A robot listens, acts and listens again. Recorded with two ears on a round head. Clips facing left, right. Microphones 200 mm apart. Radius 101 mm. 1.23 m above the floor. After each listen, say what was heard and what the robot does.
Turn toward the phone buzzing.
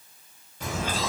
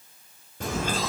Keep listening.
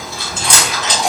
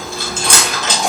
Keep listening.
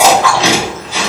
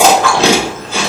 I can't make out a phone buzzing to turn to.